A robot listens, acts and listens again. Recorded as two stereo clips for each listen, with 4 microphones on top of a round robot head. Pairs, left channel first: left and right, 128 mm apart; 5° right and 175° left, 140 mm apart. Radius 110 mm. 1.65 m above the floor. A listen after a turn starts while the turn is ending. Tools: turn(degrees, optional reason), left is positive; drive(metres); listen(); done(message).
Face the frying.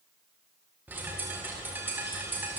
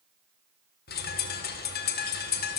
listen()
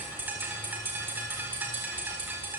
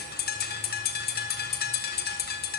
listen()
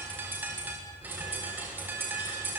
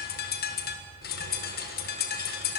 done("I can't make out frying, only a bird.")